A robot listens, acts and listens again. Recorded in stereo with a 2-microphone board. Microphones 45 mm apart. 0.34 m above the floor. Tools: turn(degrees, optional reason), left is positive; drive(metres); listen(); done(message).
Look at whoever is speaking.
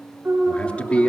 turn(degrees=30, reason="The man speaking: about 30° left or 150° left.")
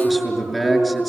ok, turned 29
done("Found it: a man speaking, straight ahead.")